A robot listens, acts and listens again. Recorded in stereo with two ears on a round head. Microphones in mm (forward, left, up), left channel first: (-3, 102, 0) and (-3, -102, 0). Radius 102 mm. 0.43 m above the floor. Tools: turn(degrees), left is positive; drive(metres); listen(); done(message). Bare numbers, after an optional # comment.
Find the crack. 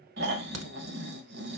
turn(-90)
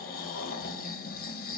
done("Facing where the crack came from. I can't hear it now.")